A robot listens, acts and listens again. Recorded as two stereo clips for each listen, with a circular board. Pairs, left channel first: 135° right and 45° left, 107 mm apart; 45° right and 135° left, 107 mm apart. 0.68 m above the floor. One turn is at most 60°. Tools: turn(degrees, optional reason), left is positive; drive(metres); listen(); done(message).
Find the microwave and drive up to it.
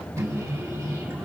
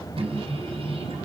turn(degrees=60, reason="The microwave: 105° left.")
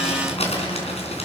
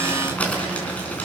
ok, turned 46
turn(degrees=60, reason="Nothing new. It was at 60° left.")
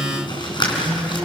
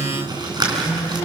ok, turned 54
drive(metres=1.0)
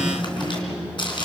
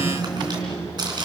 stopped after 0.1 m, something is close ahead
done("Blocked. The microwave is further on, straight ahead.")